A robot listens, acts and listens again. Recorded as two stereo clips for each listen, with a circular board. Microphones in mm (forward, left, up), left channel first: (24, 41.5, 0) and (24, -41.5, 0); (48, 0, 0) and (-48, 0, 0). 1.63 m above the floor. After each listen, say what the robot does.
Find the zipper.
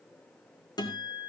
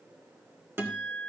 Keep listening.
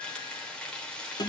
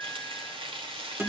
Keep listening.
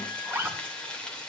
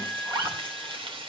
Turn 150° right.
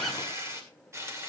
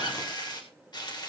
Keep listening.
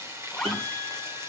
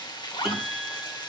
Found it: a zipper, straight ahead, 2 to 4 m away.